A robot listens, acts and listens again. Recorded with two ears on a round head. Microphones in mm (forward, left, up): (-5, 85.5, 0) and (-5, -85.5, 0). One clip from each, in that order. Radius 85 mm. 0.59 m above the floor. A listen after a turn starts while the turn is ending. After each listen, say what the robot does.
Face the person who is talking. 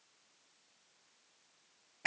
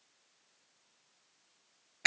Keep listening.
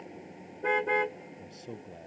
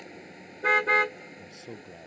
Turn 15° right.
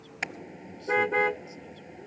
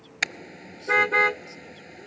Keep listening.
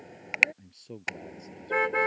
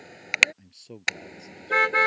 Turn 25° right.
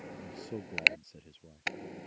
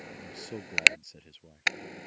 Turn 130° right.
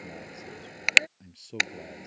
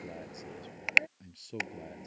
Facing the man speaking.